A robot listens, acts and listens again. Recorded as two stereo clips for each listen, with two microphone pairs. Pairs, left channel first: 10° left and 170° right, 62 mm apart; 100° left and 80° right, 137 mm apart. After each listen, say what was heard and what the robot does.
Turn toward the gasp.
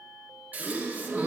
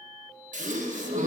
The gasp: 105° right. Turn 105° right.
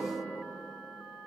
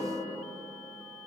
I heard a gasp from this way, but can't make it out now.